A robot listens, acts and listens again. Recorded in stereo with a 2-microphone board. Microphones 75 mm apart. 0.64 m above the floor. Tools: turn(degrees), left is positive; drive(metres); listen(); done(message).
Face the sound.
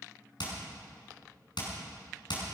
turn(degrees=90)
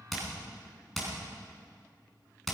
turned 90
done("Found it: hammering, straight ahead.")